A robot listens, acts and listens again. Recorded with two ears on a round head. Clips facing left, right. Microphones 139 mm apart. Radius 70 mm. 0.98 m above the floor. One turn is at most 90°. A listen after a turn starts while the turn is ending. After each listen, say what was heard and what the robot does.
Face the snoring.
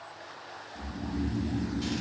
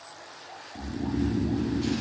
The snoring: about 65° right or 115° right. Turn 65° right.
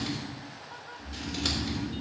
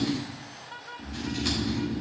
So it is at 40° right. Turn 40° right.
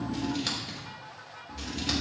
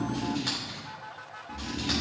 The snoring is now 15° right. Turn 15° right.
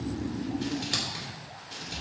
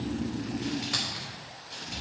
Found it: snoring, straight ahead, under 1 m away.